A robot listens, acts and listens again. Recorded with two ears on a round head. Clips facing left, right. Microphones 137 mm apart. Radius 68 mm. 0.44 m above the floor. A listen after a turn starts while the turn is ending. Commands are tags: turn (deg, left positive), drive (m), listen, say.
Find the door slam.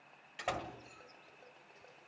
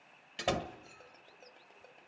<turn deg="-45"/>
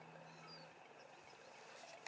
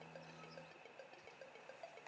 <listen/>
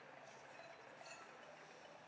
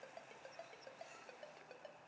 <say>I heard a door slam, but can't make it out now. It was about straight ahead or 90° right.</say>